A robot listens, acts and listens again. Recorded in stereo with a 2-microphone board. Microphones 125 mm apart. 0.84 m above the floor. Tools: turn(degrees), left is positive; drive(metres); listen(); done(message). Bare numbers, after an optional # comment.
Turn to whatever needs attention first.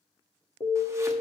# The alarm: about 60° left or 120° left.
turn(60)
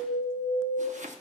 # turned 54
# So it is at 60° left.
turn(60)
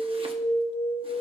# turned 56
done("Found it: an alarm, straight ahead.")